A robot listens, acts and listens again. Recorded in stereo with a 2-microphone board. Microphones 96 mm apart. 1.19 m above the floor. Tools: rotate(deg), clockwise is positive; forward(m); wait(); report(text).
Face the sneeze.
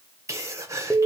rotate(30)
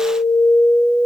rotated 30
wait()
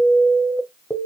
report("I heard a sneeze, but can't make it out now. It was about straight ahead or 120° right.")